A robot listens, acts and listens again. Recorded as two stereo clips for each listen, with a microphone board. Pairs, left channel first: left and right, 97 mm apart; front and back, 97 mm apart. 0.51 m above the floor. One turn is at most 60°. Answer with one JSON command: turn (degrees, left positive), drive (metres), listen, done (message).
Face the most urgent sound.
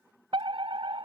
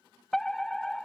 {"turn": -60}
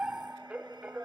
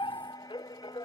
{"turn": -15}
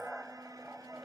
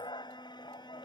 {"done": "Facing the fire alarm."}